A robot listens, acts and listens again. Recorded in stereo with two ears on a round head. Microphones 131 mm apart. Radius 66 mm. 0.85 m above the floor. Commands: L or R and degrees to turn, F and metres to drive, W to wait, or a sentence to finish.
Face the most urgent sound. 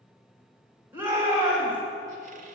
R30
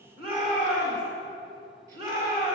R135
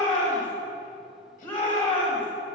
L10
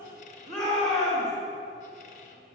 Facing the shout, 2 to 4 m away.